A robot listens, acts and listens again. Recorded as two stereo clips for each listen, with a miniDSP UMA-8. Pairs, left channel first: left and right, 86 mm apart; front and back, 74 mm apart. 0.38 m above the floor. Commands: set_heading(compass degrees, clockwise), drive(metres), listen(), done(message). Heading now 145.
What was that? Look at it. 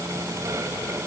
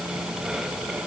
listen()
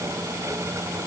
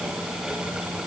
listen()
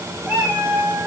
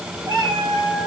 set_heading(300)
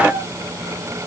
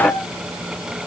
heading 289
done("Found it: a cat meowing, straight ahead.")